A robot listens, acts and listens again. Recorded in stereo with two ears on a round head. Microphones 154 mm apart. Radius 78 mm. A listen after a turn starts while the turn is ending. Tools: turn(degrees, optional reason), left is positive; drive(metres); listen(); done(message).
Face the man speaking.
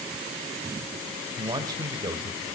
turn(degrees=-20, reason="The man speaking: about 20° right or 160° right.")
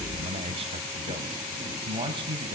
turn(degrees=-30, reason="The man speaking: about 30° right or 150° right.")
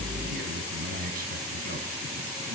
turn(degrees=-125, reason="So it is at 125° right.")
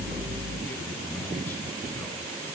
listen()
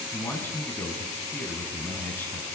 turn(degrees=10, reason="The man speaking is now 10° left.")
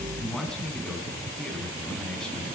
done("Found it: a man speaking, straight ahead, over 4 m away.")